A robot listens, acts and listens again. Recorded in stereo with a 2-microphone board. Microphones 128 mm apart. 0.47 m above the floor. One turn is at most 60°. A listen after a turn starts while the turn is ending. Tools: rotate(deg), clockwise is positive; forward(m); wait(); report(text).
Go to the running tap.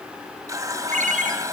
rotate(25)
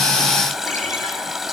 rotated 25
forward(1.0)
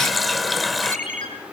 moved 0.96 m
forward(1.0)
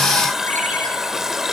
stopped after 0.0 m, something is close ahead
report("Arrived at the running tap, straight ahead.")